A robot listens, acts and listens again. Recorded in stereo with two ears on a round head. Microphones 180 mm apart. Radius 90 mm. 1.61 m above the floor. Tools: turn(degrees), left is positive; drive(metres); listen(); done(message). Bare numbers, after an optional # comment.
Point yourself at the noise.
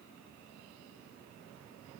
listen()
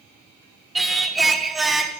turn(30)
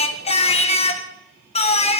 # So it is at 150° left.
turn(150)
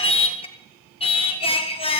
# The singing is now 30° left.
turn(30)
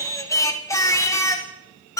# The singing is now 15° left.
turn(15)
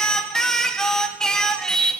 done("Found it: singing, straight ahead.")